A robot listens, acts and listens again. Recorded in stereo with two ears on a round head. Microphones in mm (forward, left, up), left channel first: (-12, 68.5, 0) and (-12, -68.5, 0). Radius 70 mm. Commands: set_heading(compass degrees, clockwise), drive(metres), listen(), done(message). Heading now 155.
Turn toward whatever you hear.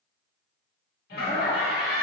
set_heading(80)
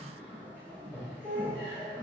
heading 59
set_heading(49)
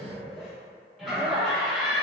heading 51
done("Facing the laughter, 1 to 2 m away.")